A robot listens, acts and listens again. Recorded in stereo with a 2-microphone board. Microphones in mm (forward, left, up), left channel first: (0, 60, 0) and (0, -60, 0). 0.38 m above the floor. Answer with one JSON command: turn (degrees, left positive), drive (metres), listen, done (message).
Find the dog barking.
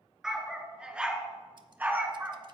{"turn": -20}
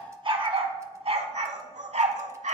{"turn": -100}
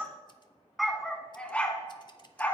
{"turn": 15}
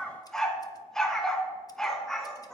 {"done": "Found it: a dog barking, straight ahead, 1 to 2 m away."}